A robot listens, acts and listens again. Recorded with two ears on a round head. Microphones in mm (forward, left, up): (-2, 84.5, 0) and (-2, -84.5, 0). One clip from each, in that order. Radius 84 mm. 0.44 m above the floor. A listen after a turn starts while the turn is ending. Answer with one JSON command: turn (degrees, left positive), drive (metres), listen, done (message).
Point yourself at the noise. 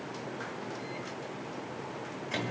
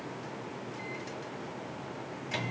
{"turn": -25}
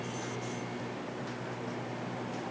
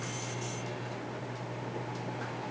{"turn": -130}
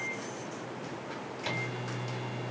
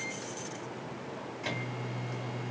{"done": "Facing the microwave."}